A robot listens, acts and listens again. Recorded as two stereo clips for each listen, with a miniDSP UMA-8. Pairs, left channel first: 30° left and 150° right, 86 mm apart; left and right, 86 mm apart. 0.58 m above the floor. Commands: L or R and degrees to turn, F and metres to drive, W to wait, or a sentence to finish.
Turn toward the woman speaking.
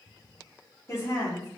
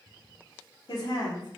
L75
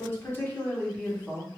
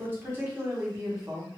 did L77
R45
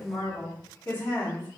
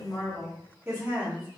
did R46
R25
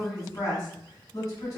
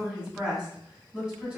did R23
Found it: a woman speaking, straight ahead, 1 to 2 m away.